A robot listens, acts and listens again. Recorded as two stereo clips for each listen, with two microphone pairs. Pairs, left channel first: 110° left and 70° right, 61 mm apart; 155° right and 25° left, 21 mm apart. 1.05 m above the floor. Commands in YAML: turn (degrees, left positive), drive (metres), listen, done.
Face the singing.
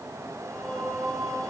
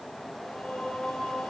turn: -165
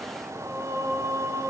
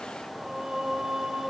turn: -30
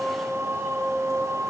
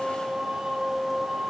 turn: -15
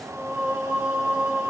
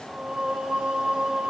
done: "Found it: singing, straight ahead, over 4 m away."